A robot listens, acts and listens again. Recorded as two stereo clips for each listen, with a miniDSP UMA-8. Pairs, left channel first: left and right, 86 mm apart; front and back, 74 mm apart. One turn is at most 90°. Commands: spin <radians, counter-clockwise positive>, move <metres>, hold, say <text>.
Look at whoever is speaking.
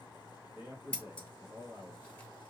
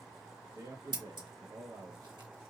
spin -1.57
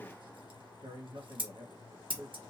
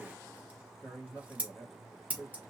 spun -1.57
spin -1.22
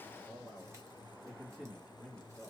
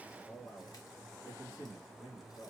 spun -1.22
say Facing the man speaking, 1 to 2 m away.